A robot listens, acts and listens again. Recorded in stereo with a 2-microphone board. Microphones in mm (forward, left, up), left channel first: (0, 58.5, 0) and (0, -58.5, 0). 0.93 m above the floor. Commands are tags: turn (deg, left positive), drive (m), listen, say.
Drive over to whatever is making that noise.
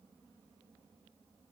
<listen/>
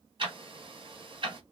<turn deg="-45"/>
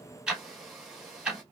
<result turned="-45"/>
<drive m="1.0"/>
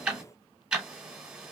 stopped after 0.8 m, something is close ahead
<turn deg="-10"/>
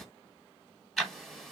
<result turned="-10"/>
<say>I am next to the ticking.</say>